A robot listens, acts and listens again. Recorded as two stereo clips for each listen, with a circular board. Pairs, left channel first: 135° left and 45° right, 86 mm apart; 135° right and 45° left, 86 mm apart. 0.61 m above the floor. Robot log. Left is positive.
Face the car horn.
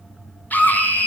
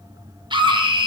cmd idle
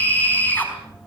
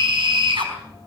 cmd idle
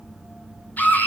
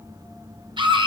end: I can't make out a car horn to turn to.